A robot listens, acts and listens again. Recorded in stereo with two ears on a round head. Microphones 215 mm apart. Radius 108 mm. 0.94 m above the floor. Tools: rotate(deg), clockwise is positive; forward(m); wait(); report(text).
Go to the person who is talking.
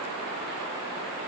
wait()
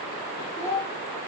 rotate(-30)
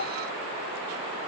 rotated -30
wait()
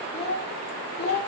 rotate(-135)
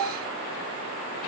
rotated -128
rotate(-10)
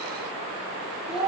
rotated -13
forward(1.0)
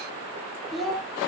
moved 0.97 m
forward(1.0)
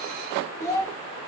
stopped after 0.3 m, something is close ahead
rotate(-15)
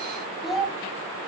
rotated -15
report("Arrived at the child speaking, straight ahead.")